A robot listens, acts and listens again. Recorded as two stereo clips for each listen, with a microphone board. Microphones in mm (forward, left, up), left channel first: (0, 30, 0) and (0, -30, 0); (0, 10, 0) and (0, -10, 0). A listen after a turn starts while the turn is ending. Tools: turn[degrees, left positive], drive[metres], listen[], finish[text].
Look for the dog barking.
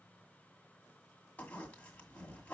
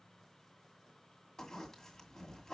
Action: listen[]
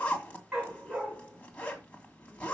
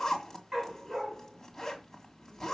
Action: turn[-30]
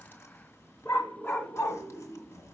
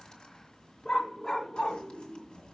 Thought: So it is at 40° left.
Action: turn[40]
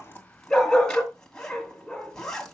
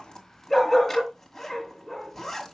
Thought: The dog barking is now 10° left.
Action: turn[10]
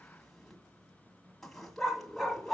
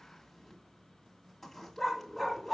Action: finish[Found it: a dog barking, straight ahead, 2 to 4 m away.]